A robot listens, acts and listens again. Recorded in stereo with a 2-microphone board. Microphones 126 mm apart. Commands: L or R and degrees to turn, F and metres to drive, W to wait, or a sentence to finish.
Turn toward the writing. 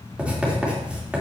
R30
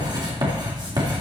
R140
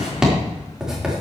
Found it: writing, straight ahead.